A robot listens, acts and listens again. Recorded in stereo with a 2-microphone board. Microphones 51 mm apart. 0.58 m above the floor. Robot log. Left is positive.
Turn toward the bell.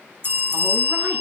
note: The bell: about 40° right or 140° right.
cmd yaw -40
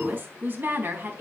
cmd idle
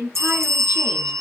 note: So it is at 95° right.
cmd yaw -95
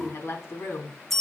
end: Facing the bell, 1 to 2 m away.